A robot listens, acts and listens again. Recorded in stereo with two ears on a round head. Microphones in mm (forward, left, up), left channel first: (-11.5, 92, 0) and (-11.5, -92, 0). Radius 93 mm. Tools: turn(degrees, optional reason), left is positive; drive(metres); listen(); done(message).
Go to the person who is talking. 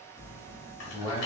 turn(degrees=20, reason="The man speaking: about 20° left or 160° left.")
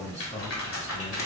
turn(degrees=140, reason="So it is at 140° left.")
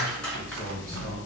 turn(degrees=50, reason="The man speaking is now 50° left.")
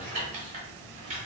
listen()
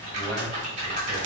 listen()
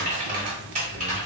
done("I heard a man speaking from this way, but can't make it out now. I did not reach it.")